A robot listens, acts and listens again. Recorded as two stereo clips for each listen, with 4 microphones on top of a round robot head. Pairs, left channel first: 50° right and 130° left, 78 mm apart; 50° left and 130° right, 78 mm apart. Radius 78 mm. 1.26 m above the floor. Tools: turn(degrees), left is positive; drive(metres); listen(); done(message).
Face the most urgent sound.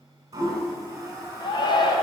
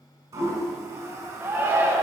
turn(degrees=-70)
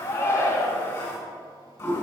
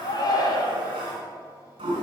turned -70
turn(degrees=10)
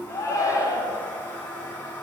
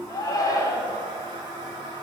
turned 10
done("Found it: a shout, straight ahead, 1 to 2 m away.")